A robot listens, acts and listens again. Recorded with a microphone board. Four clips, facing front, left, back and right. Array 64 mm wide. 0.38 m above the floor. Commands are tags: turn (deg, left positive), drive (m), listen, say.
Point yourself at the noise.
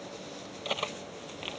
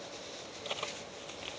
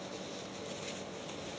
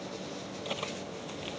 <say>Found it: cutlery clinking, straight ahead.</say>